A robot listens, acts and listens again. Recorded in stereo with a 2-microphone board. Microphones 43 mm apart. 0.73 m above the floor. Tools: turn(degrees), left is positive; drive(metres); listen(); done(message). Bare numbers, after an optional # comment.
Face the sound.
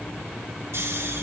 turn(-90)
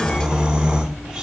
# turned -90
# So it is at 15° right.
turn(-15)
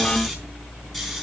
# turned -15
done("Facing the snoring, 2 to 4 m away.")